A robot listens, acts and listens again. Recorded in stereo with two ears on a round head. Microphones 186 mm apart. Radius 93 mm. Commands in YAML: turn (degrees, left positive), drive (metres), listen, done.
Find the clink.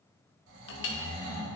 turn: 60
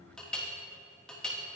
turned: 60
done: "Found it: a clink, straight ahead."